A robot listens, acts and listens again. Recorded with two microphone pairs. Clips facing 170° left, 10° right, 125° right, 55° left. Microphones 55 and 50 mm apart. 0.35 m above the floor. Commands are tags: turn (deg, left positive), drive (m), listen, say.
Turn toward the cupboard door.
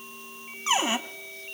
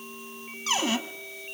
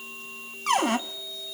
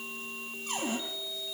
<turn deg="-120"/>
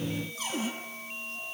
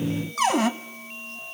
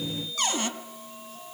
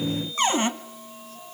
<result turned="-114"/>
<say>Found it: a cupboard door, straight ahead, 1 to 2 m away.</say>